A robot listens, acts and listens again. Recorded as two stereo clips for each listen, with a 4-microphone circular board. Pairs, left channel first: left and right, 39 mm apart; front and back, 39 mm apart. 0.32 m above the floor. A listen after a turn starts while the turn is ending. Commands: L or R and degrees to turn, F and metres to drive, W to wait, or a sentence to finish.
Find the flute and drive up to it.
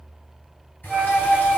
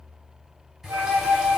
R170
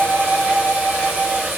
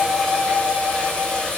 L25
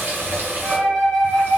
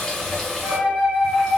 L10
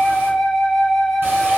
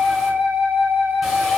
F1.0
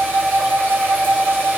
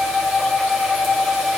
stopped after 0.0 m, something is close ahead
Blocked. The flute is further on, straight ahead.